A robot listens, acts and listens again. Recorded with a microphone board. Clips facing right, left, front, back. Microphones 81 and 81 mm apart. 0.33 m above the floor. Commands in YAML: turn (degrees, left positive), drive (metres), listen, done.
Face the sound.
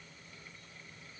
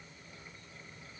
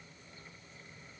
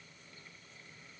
listen: true
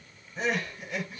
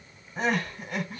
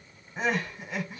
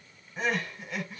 turn: 70
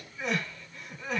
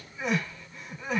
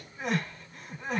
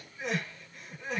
turn: 20
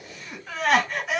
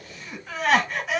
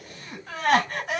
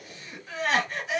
done: "Facing the crying, 1 to 2 m away."